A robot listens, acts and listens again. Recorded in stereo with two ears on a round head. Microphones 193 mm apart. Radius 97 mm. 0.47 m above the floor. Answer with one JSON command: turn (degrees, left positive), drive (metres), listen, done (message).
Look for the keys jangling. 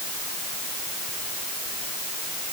{"listen": true}
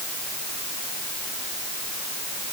{"listen": true}
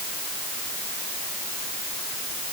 {"done": "I can't make out keys jangling to turn to."}